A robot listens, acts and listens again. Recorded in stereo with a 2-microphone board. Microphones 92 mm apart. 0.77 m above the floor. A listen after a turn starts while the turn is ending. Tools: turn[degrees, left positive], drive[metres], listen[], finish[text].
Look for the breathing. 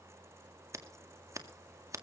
Action: listen[]
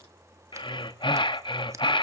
Thought: The breathing: about 60° left or 120° left.
Action: turn[60]
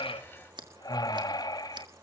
Thought: So it is at 50° left.
Action: turn[50]
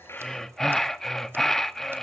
Action: finish[Facing the breathing.]